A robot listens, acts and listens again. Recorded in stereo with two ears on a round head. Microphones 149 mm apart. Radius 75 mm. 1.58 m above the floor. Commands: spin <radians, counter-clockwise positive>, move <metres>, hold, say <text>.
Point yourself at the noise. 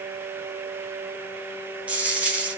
spin -0.52
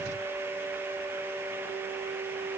hold
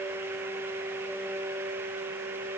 say I heard a dropped coin, but can't make it out now. It was about 20° left or 140° right.